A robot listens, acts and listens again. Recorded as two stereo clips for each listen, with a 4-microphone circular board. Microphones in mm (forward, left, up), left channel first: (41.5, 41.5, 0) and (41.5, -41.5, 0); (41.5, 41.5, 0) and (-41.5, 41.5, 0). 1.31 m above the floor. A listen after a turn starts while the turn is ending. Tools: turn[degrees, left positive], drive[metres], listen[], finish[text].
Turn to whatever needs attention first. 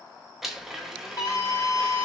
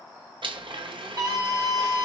Thought: The scream: 140° left.
Action: turn[140]
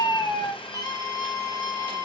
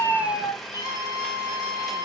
Thought: The scream is now 45° left.
Action: turn[45]
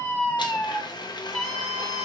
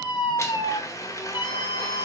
Thought: The scream is now 10° left.
Action: turn[10]
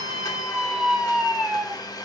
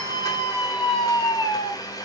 Action: finish[Facing the scream, 1 to 2 m away.]